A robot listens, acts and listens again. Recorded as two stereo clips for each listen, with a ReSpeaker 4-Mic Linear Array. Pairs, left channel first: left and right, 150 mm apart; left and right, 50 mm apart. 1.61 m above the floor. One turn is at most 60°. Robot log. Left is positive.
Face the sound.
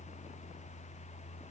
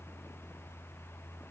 cmd idle
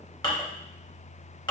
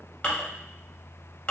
note: The dishes clattering: about 30° left or 150° left.
cmd yaw +30
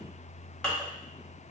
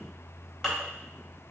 note: So it is at 10° left.
cmd yaw +10
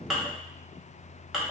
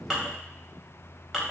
end: Facing the dishes clattering.